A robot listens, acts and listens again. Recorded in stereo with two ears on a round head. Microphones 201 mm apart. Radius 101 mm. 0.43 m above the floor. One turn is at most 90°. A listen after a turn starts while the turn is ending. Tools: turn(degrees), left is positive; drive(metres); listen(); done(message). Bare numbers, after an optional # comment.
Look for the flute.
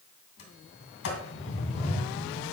listen()
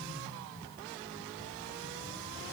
listen()
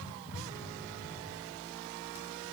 done("I can't make out a flute to turn to.")